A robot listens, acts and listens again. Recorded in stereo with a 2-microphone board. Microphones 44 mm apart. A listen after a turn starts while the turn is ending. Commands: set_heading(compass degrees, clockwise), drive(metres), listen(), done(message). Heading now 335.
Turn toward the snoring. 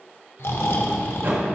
set_heading(265)
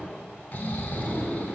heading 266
set_heading(226)
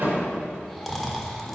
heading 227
done("Facing the snoring.")